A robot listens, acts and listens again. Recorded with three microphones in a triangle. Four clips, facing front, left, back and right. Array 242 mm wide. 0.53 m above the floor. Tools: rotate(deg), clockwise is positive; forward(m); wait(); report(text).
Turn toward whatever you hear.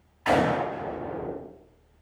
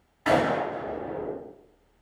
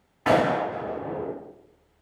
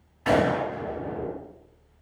rotate(-175)
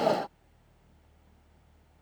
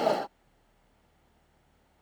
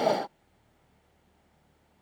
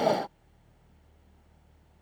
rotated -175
report("I heard a gunshot from this way, but can't make it out now.")